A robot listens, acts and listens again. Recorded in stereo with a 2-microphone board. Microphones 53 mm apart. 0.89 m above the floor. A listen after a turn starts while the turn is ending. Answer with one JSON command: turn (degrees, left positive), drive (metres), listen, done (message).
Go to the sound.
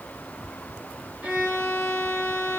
{"turn": -20}
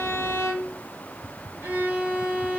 {"turn": -135}
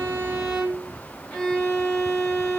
{"turn": 10}
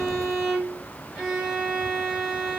{"drive": 1.0}
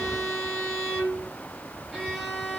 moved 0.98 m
{"drive": 1.0}
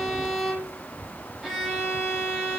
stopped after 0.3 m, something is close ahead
{"done": "I am next to the violin."}